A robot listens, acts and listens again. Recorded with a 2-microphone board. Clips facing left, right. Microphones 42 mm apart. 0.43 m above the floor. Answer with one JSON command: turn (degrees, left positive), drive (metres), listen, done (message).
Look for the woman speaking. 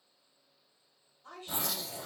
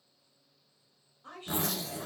{"turn": -40}
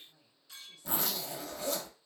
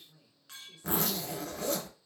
{"turn": -10}
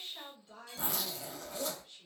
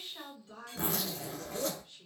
{"done": "Facing the woman speaking, 1 to 2 m away."}